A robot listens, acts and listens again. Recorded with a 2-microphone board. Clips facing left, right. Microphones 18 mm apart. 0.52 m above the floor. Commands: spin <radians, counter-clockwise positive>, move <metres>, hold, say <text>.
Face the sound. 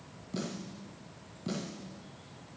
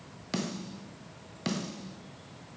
spin -1.57
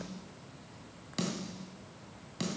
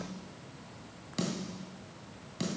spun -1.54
say Facing the snare drum, 2 to 4 m away.